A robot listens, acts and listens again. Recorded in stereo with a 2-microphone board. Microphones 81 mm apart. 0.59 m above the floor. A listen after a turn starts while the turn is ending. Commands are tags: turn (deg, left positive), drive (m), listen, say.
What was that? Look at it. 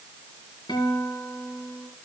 <turn deg="70"/>
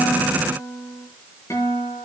<turn deg="40"/>
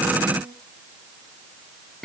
<say>Found it: a guitar, straight ahead, over 4 m away.</say>